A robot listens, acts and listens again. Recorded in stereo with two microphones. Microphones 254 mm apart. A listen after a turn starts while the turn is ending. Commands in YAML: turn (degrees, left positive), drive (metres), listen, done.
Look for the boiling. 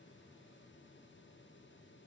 listen: true
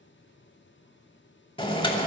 turn: 20
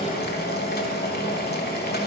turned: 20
turn: 140
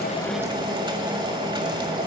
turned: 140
turn: -20
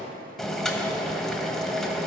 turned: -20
done: "Found it: boiling, straight ahead."